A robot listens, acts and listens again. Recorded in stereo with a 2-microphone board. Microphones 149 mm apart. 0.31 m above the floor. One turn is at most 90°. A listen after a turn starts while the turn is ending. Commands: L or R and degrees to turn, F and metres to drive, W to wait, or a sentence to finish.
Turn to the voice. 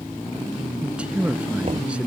R30
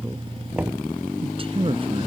R90
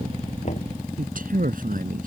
R75
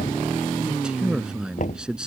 Found it: a man speaking, straight ahead.